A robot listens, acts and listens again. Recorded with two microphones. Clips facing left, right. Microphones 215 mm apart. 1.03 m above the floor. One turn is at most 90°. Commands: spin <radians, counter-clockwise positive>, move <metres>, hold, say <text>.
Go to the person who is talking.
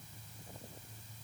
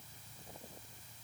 hold
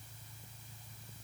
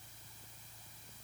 hold
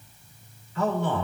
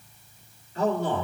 spin -0.70
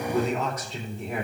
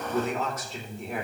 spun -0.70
move 1.0
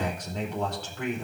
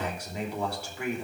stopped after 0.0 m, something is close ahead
spin -0.17
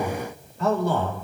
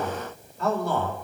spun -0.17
say Blocked. The man speaking is further on, straight ahead.